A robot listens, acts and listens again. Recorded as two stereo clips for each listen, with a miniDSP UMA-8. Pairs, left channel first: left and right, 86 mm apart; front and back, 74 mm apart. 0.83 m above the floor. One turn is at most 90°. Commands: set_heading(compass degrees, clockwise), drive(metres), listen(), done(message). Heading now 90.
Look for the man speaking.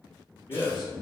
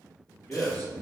set_heading(25)
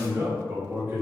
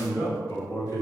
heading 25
set_heading(55)
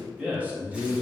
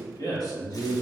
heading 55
set_heading(80)
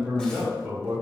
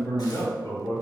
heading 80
set_heading(95)
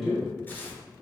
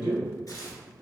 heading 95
done("Found it: a man speaking, straight ahead, 1 to 2 m away.")